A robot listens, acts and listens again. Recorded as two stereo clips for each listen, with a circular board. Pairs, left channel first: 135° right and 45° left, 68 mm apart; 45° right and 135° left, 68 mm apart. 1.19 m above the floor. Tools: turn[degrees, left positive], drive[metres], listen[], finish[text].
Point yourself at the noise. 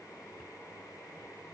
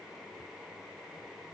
Action: listen[]
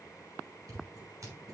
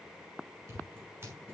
Thought: The scissors: 85° left.
Action: turn[85]
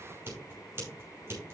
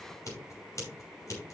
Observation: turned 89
Action: finish[Found it: scissors, straight ahead.]